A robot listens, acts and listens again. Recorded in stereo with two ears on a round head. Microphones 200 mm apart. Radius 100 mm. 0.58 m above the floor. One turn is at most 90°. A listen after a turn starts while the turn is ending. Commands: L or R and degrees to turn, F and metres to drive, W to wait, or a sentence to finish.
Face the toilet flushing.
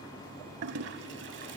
R55
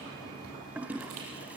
R10
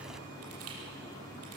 Found it: a toilet flushing, straight ahead.